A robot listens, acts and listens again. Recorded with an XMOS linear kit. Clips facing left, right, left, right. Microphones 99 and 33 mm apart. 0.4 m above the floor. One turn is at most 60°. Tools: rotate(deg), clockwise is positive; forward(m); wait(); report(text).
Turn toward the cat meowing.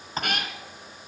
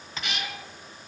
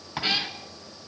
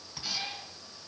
rotate(-50)
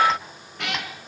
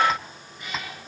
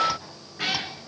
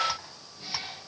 rotate(-60)
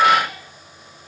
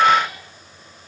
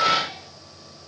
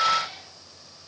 rotate(-20)
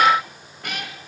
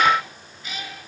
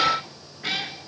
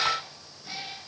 rotate(-60)
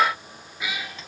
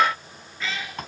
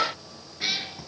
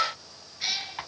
rotate(-15)
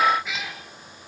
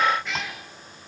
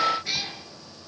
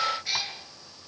report("Found it: a cat meowing, straight ahead, 2 to 4 m away.")